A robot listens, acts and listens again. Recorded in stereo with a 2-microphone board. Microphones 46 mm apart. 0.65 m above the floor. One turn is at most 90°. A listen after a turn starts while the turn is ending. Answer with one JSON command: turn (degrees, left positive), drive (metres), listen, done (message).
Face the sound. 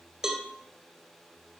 {"turn": -30}
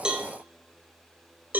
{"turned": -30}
{"turn": -90}
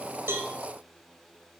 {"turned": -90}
{"turn": -45}
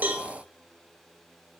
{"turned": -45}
{"listen": true}
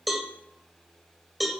{"done": "Found it: a cowbell, straight ahead, 1 to 2 m away."}